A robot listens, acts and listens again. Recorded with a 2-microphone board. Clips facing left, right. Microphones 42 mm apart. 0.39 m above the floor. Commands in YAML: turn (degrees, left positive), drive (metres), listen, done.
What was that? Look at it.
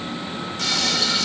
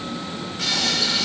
turn: -30
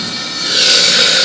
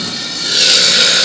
turn: 15
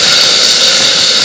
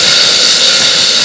done: "Found it: frying, straight ahead, over 4 m away."